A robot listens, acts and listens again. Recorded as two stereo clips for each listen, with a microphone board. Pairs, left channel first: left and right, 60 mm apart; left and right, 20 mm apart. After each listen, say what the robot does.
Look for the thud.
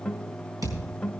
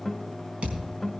Turn 90° right.
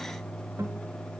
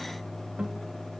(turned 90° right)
I heard a thud from this way, but can't make it out now.